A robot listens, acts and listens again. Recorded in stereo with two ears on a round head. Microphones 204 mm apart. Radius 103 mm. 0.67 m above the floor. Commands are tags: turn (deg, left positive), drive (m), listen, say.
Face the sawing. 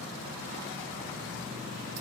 <listen/>
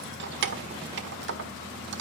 <listen/>
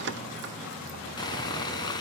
<turn deg="15"/>
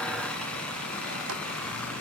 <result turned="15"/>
<say>Found it: sawing, straight ahead.</say>